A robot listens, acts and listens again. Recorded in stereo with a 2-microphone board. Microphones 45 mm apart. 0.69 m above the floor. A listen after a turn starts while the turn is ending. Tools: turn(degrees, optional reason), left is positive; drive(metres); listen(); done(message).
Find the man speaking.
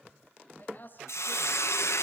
turn(degrees=45, reason="The man speaking: about 45° left or 135° left.")
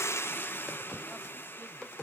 listen()
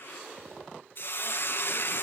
listen()
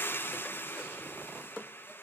done("I heard a man speaking, but can't make it out now. It was about straight ahead or 90° left.")